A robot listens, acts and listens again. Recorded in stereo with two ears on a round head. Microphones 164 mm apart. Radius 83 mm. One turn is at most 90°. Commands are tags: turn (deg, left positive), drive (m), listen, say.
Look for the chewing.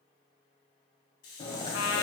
<turn deg="25"/>
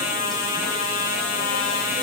<listen/>
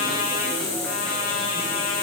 <listen/>
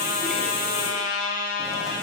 <say>I heard chewing, but can't make it out now. It was about straight ahead or 130° left.</say>